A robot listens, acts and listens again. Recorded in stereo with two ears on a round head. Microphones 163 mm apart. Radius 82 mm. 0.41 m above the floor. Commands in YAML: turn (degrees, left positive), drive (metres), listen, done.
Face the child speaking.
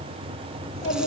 turn: 40
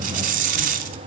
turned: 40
listen: true
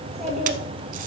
done: "Facing the child speaking."